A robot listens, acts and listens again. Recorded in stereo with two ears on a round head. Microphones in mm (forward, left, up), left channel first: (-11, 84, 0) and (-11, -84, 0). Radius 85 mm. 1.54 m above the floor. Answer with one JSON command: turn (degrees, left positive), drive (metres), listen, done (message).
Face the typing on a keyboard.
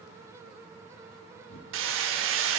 {"turn": 75}
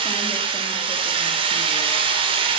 {"listen": true}
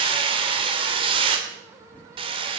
{"turn": 10}
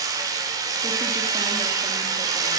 {"listen": true}
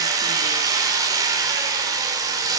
{"listen": true}
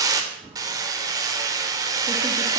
{"done": "Found it: typing on a keyboard, straight ahead, 2 to 4 m away."}